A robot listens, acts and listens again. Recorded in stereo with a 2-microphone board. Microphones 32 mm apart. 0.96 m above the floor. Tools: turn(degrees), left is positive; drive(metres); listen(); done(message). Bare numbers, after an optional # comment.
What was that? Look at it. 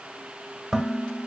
turn(-30)
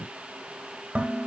# So it is at 135° right.
turn(-135)
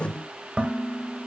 # The dishes clattering is now 40° right.
turn(-40)
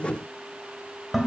done("Found it: dishes clattering, straight ahead.")